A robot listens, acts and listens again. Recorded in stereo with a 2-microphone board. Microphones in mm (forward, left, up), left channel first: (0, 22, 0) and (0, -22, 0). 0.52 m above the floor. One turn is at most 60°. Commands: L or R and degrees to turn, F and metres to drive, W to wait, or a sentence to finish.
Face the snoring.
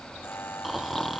L30
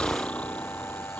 L60
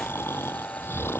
L60
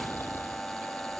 L60
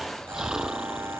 R15
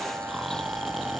Facing the snoring.